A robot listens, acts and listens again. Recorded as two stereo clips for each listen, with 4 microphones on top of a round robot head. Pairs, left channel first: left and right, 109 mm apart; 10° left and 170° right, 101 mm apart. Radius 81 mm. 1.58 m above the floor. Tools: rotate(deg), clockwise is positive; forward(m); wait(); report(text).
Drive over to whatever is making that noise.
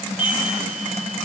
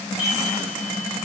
rotate(70)
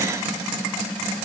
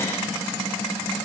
wait()
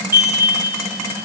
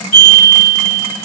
rotate(20)
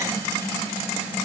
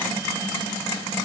wait()
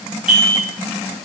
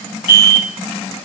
forward(1.0)
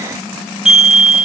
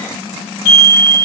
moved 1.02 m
forward(1.0)
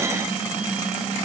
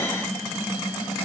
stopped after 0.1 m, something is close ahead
wait()
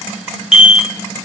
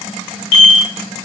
report("I am next to the chime.")